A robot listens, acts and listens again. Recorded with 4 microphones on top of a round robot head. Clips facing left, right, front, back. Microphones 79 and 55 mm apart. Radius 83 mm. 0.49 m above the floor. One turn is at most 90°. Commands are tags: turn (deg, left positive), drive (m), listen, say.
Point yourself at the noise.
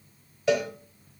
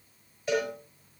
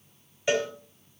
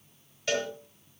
<turn deg="75"/>
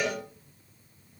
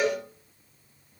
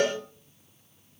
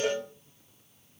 <turn deg="-10"/>
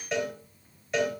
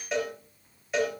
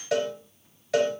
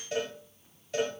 <say>Facing the cowbell.</say>